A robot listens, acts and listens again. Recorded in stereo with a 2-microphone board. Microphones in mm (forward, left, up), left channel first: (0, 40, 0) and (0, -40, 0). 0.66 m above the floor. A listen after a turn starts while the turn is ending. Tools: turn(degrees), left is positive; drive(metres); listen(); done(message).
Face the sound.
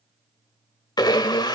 turn(degrees=65)
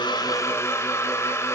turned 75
turn(degrees=40)
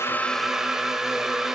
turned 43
done("Facing the blender, 1 to 2 m away.")